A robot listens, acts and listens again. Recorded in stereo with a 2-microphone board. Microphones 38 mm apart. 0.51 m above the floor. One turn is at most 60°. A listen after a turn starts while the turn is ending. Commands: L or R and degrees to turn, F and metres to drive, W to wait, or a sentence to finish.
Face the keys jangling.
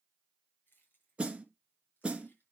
L60
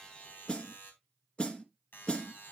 W
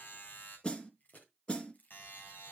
L45
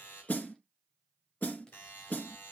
W
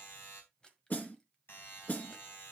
L20
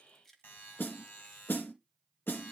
L10
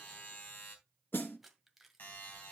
Facing the keys jangling, 1 to 2 m away.